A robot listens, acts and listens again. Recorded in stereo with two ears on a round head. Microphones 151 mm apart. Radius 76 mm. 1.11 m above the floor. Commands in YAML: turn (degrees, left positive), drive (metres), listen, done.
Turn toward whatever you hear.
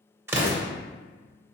turn: -15
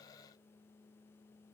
listen: true
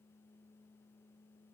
done: "I heard an explosion, but can't make it out now. It was about straight ahead or 150° right."